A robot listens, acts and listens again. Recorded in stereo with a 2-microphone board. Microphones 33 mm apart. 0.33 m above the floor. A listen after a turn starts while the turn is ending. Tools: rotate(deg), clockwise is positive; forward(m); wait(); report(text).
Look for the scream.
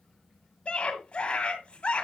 rotate(-35)
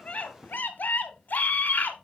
rotate(-105)
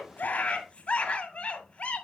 rotate(-40)
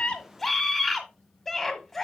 report("Found it: a scream, straight ahead, 1 to 2 m away.")